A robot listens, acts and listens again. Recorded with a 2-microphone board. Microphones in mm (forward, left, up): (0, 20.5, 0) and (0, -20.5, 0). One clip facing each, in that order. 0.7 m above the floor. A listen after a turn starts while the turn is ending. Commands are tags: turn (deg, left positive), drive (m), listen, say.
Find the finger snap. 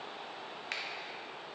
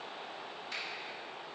<turn deg="65"/>
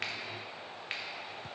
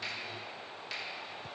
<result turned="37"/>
<turn deg="45"/>
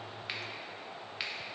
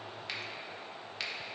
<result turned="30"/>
<turn deg="15"/>
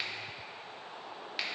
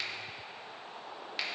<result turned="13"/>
<say>Found it: a finger snap, straight ahead.</say>